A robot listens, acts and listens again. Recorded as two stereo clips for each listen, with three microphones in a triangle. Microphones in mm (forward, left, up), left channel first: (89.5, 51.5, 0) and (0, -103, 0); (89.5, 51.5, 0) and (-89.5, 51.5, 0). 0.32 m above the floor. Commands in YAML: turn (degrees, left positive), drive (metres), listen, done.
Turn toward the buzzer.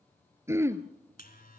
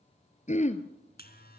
turn: 25
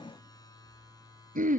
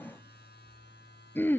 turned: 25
turn: -10
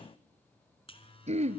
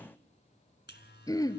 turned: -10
done: "Facing the buzzer."